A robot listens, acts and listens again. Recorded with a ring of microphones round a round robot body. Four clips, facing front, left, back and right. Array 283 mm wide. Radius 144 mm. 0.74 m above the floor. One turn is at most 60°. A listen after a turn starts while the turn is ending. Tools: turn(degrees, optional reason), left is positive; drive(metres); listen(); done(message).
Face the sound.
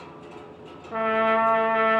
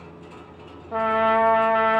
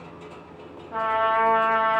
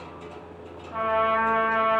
turn(degrees=60, reason="The trumpet: 65° left.")
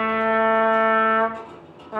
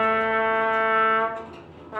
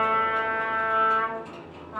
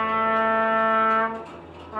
turn(degrees=15, reason="The trumpet is now 15° left.")
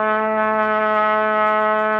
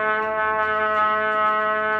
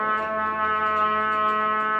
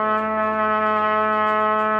done("Facing the trumpet.")